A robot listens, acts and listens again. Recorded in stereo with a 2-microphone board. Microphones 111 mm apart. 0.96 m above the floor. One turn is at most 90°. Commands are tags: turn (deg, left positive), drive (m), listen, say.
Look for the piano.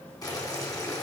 <listen/>
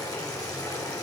<listen/>
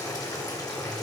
<say>I can't make out a piano, only boiling.</say>